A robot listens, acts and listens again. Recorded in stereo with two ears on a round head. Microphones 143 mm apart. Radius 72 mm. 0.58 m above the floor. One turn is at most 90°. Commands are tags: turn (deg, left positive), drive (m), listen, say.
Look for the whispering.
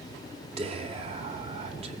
<turn deg="-40"/>
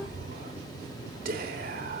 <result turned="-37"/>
<turn deg="-90"/>
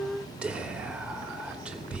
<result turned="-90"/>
<say>Facing the whispering.</say>